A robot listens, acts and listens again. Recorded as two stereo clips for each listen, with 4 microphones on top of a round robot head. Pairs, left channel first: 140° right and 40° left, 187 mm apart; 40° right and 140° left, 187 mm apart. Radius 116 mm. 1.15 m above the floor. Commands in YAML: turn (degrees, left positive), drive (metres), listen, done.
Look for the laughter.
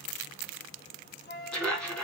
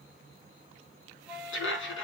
turn: -55
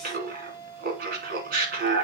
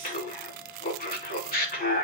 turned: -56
done: "Found it: laughter, straight ahead."